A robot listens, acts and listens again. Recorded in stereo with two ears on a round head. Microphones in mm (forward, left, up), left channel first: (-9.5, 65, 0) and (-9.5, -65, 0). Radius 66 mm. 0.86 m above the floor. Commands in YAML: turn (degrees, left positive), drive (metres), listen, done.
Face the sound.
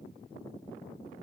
listen: true
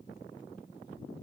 listen: true
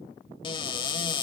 turn: 35
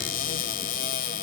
turn: 105
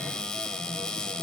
done: "Found it: a cupboard door, straight ahead."